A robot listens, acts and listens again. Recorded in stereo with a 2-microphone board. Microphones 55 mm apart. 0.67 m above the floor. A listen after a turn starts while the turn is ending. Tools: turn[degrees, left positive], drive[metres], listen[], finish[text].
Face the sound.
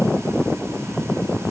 Action: listen[]
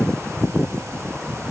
Action: listen[]
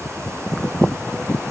Action: finish[I can't make out anything.]